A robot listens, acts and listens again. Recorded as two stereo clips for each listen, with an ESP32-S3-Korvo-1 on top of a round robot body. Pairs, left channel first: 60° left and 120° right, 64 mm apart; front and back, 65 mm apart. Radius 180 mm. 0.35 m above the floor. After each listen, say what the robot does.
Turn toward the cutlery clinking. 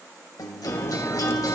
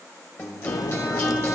Turn 15° left.
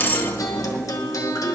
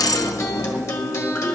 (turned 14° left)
Found it: cutlery clinking, straight ahead.